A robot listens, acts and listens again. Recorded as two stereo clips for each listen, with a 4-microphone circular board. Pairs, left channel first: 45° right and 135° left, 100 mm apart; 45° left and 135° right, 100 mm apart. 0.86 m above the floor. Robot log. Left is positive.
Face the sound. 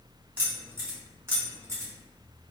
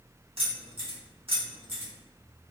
note: The keys jangling: 165° right.
cmd yaw -165
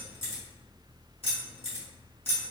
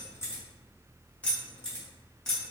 note: The keys jangling is now 35° right.
cmd yaw -35
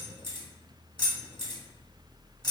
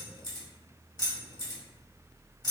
end: Facing the keys jangling.